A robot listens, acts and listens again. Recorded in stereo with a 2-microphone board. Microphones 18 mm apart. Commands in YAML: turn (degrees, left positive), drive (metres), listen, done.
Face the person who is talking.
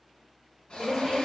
turn: -20
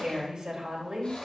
turn: -140
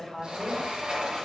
done: "Found it: a woman speaking, straight ahead, 2 to 4 m away."